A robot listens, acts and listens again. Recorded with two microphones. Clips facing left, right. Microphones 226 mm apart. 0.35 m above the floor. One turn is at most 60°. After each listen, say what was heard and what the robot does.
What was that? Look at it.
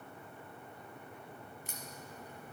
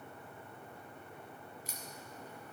The crack: about 50° left or 130° left. Turn 50° left.
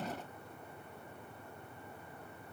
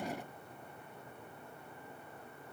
Keep listening.
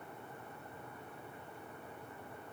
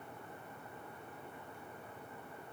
I heard a crack, but can't make it out now. It was about straight ahead or 80° left.